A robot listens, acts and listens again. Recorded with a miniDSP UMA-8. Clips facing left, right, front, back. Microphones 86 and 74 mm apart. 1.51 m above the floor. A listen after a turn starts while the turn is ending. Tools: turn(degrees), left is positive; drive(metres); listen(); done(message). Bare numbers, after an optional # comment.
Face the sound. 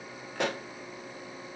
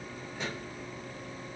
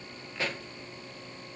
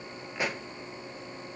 # The pop: 110° left.
turn(110)
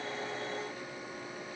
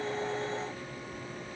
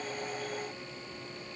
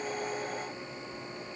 done("Facing where the pop came from. I can't hear it now.")